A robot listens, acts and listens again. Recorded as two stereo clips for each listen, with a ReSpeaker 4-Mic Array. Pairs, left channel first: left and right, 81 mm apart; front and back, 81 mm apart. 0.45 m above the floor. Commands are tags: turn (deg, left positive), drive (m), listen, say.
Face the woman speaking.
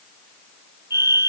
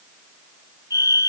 <listen/>
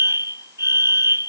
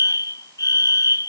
<listen/>
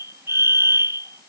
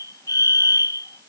<say>I can't make out a woman speaking to turn to.</say>